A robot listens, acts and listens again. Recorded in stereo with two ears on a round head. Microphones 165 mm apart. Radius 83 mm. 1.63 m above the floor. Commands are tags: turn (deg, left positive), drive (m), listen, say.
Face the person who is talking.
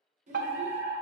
<turn deg="-40"/>
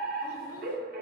<listen/>
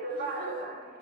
<listen/>
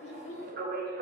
<turn deg="40"/>
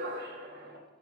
<listen/>
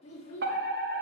<turn deg="35"/>
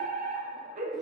<listen/>
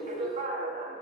<listen/>
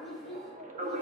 <say>Facing the child speaking, 2 to 4 m away.</say>